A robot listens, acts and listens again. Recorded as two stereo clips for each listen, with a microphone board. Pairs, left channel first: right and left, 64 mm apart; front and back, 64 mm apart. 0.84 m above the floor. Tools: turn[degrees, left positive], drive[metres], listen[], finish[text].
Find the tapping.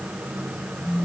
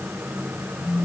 Action: listen[]
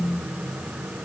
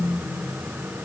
Action: listen[]
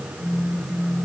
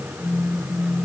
Action: finish[I can't make out tapping to turn to.]